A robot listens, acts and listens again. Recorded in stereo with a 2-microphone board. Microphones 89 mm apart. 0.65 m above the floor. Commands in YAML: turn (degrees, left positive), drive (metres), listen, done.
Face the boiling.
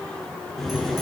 turn: 30
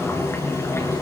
turn: 150
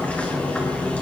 turn: 15
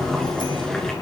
done: "Found it: boiling, straight ahead, over 4 m away."